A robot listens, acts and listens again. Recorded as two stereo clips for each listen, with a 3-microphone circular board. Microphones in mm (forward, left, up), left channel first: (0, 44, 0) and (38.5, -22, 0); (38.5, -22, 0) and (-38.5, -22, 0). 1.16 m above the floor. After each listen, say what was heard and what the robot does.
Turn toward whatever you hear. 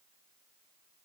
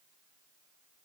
Keep listening.
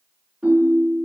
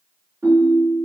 The ringtone: 130° right. Turn 130° right.
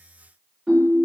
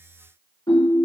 The ringtone is now 25° left. Turn 25° left.
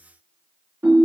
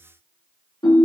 Facing the ringtone.